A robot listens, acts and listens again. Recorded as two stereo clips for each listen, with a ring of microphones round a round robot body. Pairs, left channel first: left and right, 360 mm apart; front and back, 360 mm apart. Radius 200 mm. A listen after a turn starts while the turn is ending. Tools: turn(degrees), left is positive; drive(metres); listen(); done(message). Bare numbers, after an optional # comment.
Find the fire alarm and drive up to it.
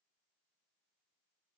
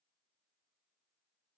listen()
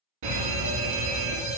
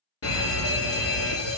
# The fire alarm: 50° right.
turn(-50)
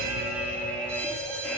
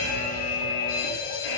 drive(1.0)
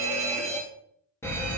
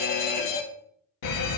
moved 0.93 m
# The fire alarm is now 10° left.
turn(10)
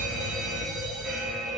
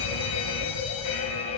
drive(1.0)
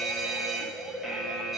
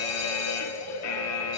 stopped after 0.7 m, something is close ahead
done("I am next to the fire alarm.")